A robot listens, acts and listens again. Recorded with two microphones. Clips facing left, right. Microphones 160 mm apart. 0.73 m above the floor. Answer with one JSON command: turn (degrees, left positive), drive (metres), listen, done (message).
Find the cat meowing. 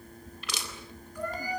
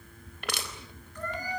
{"turn": 30}
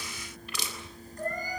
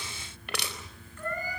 {"turn": 140}
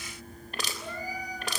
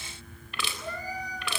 {"turn": 10}
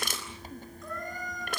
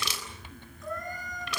{"done": "Facing the cat meowing, over 4 m away."}